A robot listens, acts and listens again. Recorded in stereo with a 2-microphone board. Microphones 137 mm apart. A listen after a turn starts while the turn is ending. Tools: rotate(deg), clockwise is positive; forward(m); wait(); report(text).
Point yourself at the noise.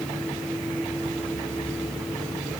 wait()
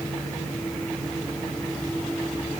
wait()
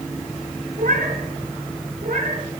rotate(90)
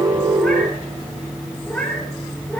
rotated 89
rotate(-10)
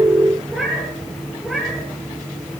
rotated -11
report("Found it: a cat meowing, straight ahead.")